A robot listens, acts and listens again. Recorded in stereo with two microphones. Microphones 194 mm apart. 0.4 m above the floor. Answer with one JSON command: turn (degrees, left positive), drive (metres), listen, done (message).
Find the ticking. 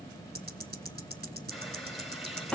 {"turn": -50}
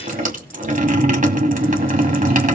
{"listen": true}
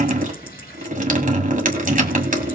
{"listen": true}
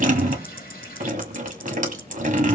{"done": "I heard ticking, but can't make it out now. It was about straight ahead or 80° right."}